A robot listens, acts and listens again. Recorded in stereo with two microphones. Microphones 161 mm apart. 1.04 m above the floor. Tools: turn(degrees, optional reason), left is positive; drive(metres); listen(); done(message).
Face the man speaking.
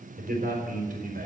turn(degrees=-60, reason="The man speaking: about 60° right or 120° right.")
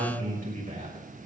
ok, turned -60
turn(degrees=-60, reason="So it is at 60° right.")
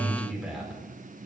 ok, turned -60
done("Found it: a man speaking, straight ahead.")